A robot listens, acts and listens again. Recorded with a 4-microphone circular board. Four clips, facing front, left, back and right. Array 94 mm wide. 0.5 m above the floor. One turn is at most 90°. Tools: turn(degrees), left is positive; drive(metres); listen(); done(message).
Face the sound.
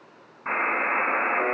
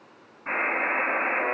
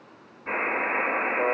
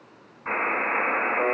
turn(degrees=-20)
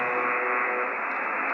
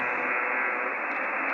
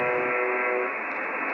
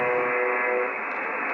done("Facing the buzzer, 2 to 4 m away.")